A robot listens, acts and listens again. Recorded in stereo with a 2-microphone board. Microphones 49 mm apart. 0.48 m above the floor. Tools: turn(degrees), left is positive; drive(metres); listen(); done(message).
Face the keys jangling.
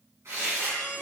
listen()
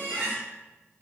listen()
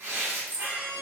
turn(degrees=-30)
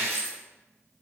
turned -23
turn(degrees=-125)
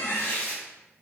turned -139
turn(degrees=15)
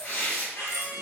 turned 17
listen()
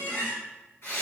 done("Facing where the keys jangling came from. I can't hear it now.")